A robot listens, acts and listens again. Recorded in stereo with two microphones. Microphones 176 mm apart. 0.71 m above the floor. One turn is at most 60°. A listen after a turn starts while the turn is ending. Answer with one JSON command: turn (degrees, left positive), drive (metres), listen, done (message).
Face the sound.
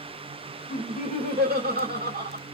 {"turn": -60}
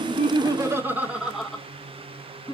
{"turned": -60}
{"turn": 25}
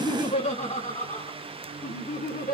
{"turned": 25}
{"turn": 50}
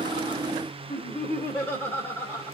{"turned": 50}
{"turn": 10}
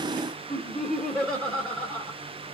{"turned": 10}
{"done": "Found it: laughter, straight ahead, 1 to 2 m away."}